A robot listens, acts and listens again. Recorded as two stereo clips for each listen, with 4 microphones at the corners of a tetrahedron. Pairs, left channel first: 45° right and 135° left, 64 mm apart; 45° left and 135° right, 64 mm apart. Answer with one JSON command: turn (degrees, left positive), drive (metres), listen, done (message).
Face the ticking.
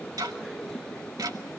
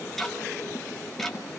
{"turn": 130}
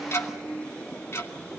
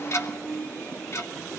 {"done": "Facing the ticking."}